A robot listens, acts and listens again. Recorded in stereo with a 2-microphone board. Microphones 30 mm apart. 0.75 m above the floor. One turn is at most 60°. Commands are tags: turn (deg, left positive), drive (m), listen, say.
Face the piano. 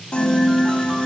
<turn deg="50"/>
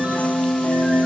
<turn deg="60"/>
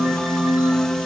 <turn deg="20"/>
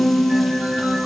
<say>Found it: a piano, straight ahead, 1 to 2 m away.</say>